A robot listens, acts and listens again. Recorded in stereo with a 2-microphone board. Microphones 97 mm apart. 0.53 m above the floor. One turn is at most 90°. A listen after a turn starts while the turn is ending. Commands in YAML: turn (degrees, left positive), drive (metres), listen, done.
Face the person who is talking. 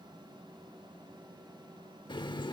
listen: true
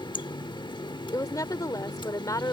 turn: 35
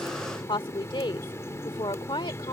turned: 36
turn: 90
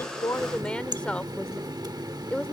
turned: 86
turn: 15
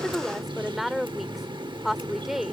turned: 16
done: "Found it: a woman speaking, straight ahead."